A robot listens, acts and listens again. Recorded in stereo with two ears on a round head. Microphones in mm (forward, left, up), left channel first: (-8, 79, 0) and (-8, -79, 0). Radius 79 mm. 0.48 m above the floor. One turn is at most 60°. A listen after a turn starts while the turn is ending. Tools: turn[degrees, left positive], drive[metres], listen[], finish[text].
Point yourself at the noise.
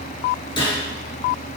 Thought: The gunshot: about 25° left or 155° left.
Action: turn[25]
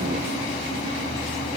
Action: listen[]
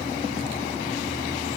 Action: finish[I heard a gunshot, but can't make it out now. It was about straight ahead or 130° left.]